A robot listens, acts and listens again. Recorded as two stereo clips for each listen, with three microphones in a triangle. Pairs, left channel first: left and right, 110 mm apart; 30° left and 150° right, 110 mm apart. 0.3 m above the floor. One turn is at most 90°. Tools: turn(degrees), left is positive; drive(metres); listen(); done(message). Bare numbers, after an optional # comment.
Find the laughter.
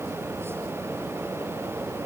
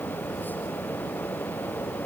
listen()
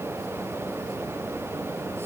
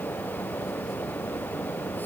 listen()
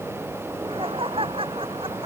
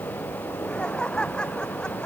# The laughter: 55° right.
turn(-55)
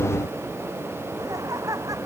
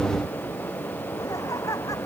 # The laughter is now 30° right.
turn(-30)
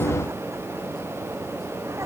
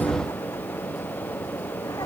listen()
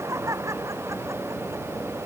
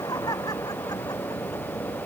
# The laughter is now 25° right.
turn(-25)
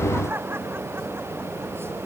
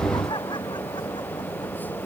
listen()
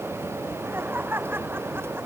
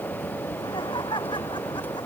# The laughter is now 20° right.
turn(-20)
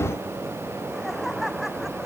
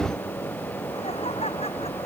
done("Found it: laughter, straight ahead.")